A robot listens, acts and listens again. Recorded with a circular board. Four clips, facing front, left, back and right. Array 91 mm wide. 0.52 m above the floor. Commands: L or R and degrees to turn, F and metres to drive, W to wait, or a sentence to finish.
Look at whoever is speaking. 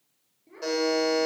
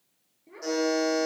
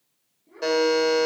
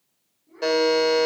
L65
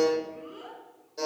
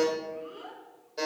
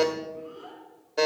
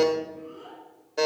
L35
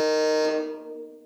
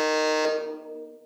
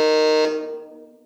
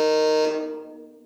W
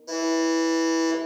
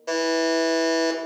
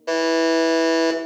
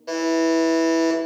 W
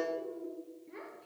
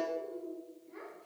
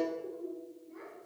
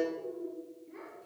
Facing the child speaking, over 4 m away.